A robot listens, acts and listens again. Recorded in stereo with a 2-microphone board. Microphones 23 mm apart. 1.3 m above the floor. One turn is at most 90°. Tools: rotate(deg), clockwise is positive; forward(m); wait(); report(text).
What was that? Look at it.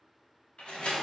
rotate(-50)
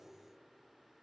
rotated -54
wait()
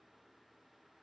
report("I heard a door slam, but can't make it out now. It was about 5° right or 75° left.")